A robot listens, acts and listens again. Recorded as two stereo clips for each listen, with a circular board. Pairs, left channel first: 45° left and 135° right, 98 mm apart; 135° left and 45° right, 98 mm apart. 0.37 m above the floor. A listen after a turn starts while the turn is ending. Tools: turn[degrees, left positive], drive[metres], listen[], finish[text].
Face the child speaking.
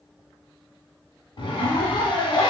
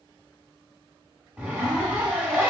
Action: listen[]
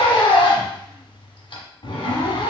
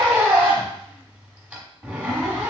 Action: listen[]
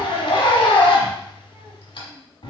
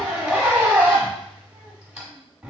Action: finish[I can't make out a child speaking, only a zipper.]